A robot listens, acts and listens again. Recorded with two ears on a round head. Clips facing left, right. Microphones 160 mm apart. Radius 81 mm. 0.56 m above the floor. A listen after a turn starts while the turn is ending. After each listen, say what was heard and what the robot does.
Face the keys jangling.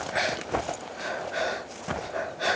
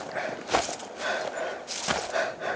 Keep listening.
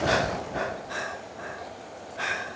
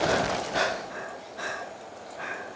Keep listening.
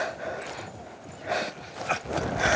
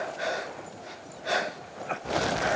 I can't make out keys jangling.